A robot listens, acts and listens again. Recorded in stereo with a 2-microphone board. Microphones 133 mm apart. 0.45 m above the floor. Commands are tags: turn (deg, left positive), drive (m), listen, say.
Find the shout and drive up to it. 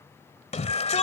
<turn deg="60"/>
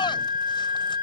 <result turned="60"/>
<listen/>
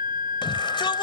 <listen/>
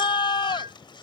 <turn deg="45"/>
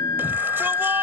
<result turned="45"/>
<listen/>
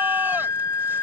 <listen/>
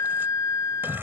<turn deg="-15"/>
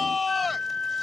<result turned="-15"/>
<drive m="1.0"/>
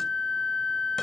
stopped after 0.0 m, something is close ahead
<listen/>
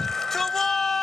<say>Something is in my way. I am facing the shout but have not reached it.</say>